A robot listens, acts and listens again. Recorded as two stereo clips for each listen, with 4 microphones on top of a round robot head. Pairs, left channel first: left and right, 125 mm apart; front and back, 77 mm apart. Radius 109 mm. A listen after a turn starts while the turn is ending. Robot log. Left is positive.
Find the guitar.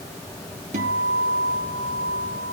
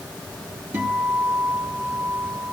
note: The guitar: 110° right.
cmd yaw -110
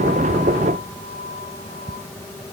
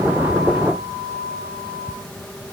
note: The guitar is now 20° left.
cmd yaw +20
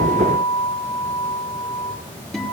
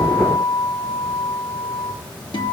end: Found it: a guitar, straight ahead.